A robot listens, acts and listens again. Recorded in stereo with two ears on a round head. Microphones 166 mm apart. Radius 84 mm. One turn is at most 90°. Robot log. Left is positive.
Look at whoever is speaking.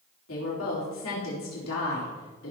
cmd yaw +90
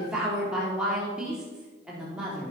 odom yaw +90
end: Facing the woman speaking, 2 to 4 m away.